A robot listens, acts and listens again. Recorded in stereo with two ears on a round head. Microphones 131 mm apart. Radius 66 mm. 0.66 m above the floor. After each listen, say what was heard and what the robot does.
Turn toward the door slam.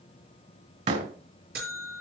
The door slam: about 50° right or 130° right. Turn 50° right.
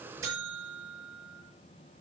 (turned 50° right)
Keep listening.
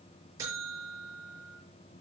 I heard a door slam, but can't make it out now. It was about straight ahead or 80° right.